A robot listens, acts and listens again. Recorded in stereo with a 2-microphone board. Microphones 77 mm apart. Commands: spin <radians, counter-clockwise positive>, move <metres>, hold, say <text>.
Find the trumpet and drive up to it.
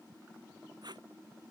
hold
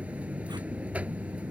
hold
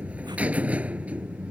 say I can't make out a trumpet to turn to.